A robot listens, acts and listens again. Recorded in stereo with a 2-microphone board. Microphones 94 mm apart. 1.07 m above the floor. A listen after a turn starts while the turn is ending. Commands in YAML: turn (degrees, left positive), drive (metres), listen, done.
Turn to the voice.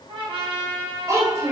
turn: -30
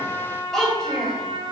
turn: 10
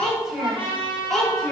done: "Facing the child speaking, 2 to 4 m away."